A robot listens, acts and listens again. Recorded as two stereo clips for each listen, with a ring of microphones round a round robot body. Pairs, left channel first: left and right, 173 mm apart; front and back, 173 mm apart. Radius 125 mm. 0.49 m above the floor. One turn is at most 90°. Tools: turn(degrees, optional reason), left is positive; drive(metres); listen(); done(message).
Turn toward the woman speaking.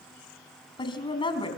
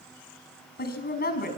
turn(degrees=30, reason="The woman speaking: 30° left.")
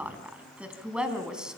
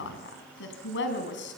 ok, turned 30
done("Found it: a woman speaking, straight ahead.")